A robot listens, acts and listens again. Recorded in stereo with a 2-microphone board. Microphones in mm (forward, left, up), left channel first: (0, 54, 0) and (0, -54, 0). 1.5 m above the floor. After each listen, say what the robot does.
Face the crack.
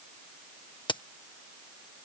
Turn 45° left.
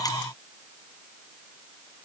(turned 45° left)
Keep listening.
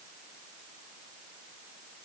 I heard a crack, but can't make it out now. It was about straight ahead or 90° left.